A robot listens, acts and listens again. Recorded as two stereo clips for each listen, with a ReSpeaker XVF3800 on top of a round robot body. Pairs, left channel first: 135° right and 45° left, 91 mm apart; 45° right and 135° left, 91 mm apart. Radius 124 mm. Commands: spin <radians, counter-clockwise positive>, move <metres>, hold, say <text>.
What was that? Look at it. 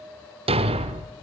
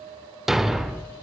spin 0.87
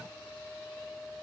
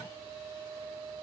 say Facing where the thud came from. I can't hear it now.